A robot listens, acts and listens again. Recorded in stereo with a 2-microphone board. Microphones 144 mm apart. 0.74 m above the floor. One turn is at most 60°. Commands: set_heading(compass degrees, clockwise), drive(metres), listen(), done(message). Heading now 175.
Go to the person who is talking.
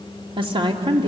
set_heading(210)
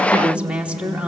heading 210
set_heading(220)
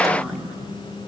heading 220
drive(1.0)
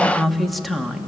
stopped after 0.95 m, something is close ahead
done("Arrived at the woman speaking, straight ahead.")